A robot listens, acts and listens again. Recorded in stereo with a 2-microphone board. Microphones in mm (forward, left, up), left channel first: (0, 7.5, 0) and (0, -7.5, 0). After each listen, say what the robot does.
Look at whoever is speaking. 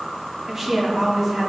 Turn 30° right.
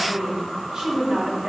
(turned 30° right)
Turn 120° right.
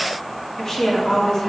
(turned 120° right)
Turn 35° left.
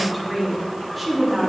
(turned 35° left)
Found it: a woman speaking, straight ahead, 2 to 4 m away.